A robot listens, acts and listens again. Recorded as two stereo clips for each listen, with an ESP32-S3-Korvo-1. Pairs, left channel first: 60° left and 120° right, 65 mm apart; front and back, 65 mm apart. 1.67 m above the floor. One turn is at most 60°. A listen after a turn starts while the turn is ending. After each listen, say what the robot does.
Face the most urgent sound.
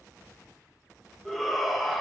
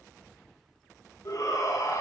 Turn 30° right.
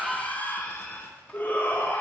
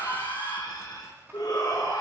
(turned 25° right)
Facing the shout, 1 to 2 m away.